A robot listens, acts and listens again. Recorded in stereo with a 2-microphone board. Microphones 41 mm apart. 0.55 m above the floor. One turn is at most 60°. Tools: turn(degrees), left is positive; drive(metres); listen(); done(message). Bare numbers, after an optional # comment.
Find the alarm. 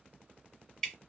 listen()
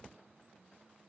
listen()
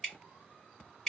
done("I can't make out an alarm to turn to.")